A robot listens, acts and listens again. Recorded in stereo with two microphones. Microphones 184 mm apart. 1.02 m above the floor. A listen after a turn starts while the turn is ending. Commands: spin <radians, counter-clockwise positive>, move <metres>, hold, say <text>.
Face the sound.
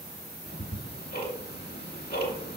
spin 1.05
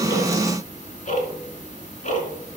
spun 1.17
spin 0.79
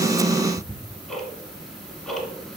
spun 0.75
say Facing the ticking.